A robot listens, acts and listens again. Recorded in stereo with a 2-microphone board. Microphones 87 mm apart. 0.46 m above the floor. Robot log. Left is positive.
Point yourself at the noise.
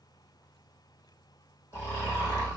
note: The snoring: about 30° left or 150° left.
cmd yaw +30
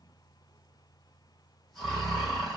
end: Facing the snoring, 2 to 4 m away.